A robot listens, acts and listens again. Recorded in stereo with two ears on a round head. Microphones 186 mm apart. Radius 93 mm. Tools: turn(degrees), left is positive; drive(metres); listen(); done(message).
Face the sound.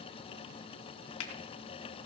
turn(degrees=90)
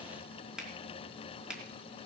done("Found it: a finger snap, straight ahead, 2 to 4 m away.")